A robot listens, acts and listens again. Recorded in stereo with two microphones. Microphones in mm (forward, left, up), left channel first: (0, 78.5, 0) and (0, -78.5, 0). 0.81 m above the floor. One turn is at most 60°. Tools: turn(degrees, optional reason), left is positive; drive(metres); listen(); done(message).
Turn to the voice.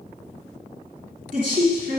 turn(degrees=-55, reason="The woman speaking: about 55° right or 125° right.")
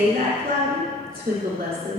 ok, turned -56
turn(degrees=-60, reason="So it is at 65° right.")
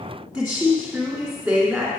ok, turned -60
done("Facing the woman speaking.")